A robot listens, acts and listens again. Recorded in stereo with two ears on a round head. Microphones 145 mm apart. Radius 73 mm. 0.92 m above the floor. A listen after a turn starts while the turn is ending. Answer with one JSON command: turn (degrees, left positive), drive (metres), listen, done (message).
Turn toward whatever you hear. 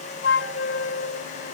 {"turn": 90}
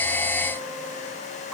{"done": "Found it: a flute, straight ahead."}